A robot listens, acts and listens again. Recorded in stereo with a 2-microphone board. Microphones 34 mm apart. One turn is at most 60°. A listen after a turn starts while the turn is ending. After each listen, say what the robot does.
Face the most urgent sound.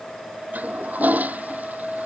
Keep listening.
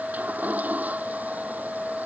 Keep listening.
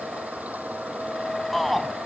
Turn 30° left.
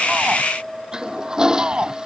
Turn 30° right.
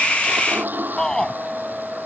Turn 15° left.
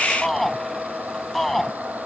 Found it: a shout, straight ahead.